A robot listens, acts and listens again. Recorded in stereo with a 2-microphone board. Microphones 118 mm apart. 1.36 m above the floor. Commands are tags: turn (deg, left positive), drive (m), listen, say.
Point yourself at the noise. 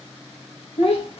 <turn deg="55"/>
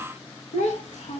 <turn deg="85"/>
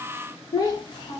<turn deg="40"/>
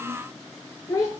<turn deg="30"/>
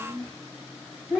<say>Facing the child speaking.</say>